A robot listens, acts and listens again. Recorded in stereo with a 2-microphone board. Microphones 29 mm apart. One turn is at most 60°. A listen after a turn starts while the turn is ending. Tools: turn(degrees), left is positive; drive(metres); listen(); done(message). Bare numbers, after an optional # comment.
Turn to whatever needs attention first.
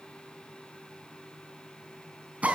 listen()
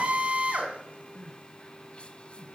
# The crying: about 40° left or 140° left.
turn(40)
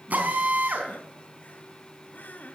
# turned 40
# So it is at 100° left.
turn(60)
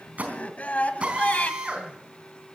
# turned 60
# The crying is now 55° left.
turn(55)
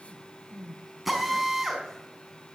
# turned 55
# The crying is now 15° left.
turn(15)
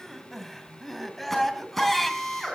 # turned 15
done("Found it: crying, straight ahead.")